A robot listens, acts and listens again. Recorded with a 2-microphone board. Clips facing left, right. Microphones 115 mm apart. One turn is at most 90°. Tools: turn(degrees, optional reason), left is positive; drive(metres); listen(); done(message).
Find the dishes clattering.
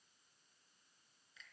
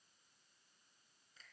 listen()
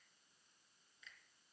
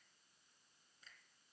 listen()
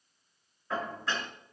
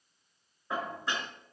turn(degrees=-15, reason="The dishes clattering: about 15° right or 165° right.")
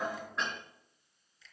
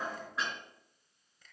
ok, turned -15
done("Facing the dishes clattering.")